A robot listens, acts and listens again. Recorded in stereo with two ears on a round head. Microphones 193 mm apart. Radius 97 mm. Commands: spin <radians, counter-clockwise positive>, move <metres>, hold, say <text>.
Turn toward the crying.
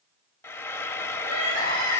spin -0.96
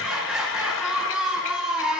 say Facing the crying.